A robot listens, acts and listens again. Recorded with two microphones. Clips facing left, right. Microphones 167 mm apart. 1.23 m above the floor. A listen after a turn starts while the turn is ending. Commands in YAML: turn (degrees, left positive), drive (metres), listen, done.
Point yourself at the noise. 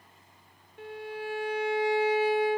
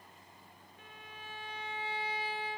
turn: 90
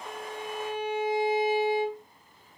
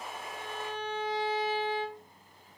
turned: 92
turn: 10
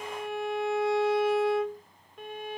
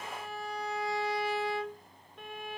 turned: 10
done: "Facing the violin."